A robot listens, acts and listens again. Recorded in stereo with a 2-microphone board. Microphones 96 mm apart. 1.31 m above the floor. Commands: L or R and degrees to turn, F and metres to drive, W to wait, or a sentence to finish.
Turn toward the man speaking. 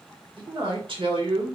R60
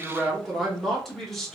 Found it: a man speaking, straight ahead.